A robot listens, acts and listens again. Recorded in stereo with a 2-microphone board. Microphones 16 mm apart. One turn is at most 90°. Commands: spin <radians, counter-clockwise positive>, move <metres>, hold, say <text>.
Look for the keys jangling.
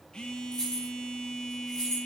spin 0.87
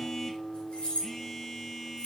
spin 1.22
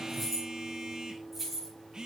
say Facing the keys jangling, over 4 m away.